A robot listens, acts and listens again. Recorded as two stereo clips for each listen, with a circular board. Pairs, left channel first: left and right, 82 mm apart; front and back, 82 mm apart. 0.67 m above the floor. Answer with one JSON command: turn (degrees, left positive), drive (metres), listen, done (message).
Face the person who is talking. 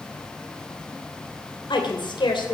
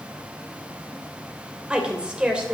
{"turn": 100}
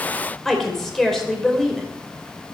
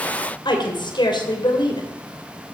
{"done": "Found it: a woman speaking, straight ahead, 2 to 4 m away."}